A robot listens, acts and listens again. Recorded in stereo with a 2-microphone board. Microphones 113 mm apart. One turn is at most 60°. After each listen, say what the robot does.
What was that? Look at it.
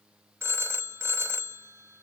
Turn 25° right.
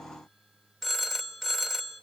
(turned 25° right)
Facing the phone ringing, 1 to 2 m away.